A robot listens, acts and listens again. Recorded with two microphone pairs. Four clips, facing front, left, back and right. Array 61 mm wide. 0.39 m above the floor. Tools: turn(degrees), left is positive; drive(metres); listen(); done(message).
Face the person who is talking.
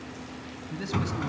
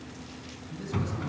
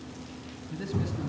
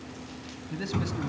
turn(degrees=-85)
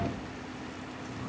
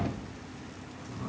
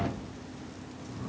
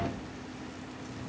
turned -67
turn(degrees=-20)
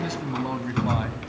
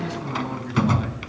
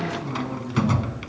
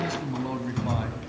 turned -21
done("Facing the man speaking, 2 to 4 m away.")